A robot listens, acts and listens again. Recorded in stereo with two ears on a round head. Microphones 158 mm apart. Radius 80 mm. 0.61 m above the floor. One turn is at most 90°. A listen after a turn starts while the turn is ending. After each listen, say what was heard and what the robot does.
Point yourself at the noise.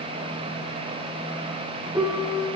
The piano: about 15° right or 165° right. Turn 15° right.
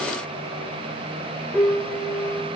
Facing the piano, 1 to 2 m away.